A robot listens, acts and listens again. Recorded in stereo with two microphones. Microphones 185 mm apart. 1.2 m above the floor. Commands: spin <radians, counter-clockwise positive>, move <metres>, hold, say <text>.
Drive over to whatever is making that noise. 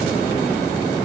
hold
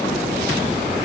hold
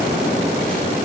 say I can't make out anything to turn to.